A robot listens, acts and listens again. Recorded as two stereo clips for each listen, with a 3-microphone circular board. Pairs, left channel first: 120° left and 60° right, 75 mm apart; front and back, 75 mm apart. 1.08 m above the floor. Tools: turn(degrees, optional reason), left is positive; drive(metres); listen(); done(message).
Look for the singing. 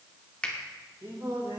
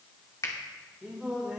turn(degrees=-100, reason="The singing: 100° right.")
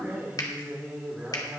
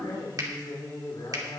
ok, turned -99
turn(degrees=15, reason="The singing is now 15° left.")
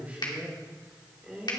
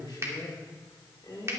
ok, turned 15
turn(degrees=20, reason="The singing is now 20° left.")
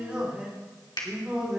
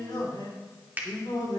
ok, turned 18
turn(degrees=20, reason="The singing is now 20° left.")
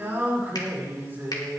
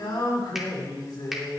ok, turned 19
done("Found it: singing, straight ahead.")